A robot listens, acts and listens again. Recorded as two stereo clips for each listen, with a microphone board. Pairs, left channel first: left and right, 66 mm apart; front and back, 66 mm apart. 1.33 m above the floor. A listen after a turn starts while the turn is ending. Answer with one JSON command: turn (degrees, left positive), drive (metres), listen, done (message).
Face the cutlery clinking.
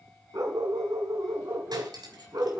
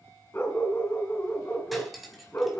{"turn": -90}
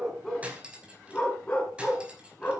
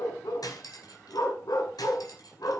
{"turn": -15}
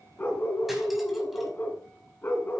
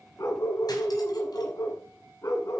{"listen": true}
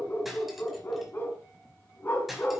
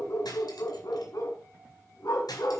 {"done": "Found it: cutlery clinking, straight ahead."}